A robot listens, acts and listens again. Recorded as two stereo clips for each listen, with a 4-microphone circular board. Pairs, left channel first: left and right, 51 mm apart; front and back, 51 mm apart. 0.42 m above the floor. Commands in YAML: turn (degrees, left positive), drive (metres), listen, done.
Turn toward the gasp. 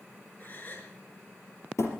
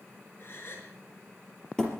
turn: 35
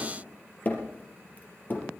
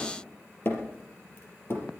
done: "Facing where the gasp came from. I can't hear it now."